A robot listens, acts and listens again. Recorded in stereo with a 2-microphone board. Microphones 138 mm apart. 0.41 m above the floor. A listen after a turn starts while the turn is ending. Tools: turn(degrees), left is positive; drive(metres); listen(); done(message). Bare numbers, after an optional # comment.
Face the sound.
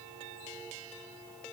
listen()
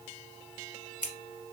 turn(90)
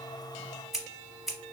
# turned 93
done("Found it: scissors, straight ahead, under 1 m away.")